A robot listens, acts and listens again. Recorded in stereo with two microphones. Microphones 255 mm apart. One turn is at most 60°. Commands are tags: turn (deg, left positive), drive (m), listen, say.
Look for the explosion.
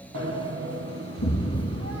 <turn deg="60"/>
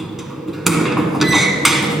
<listen/>
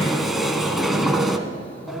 <say>I heard an explosion, but can't make it out now. It was about 10° left or 50° left.</say>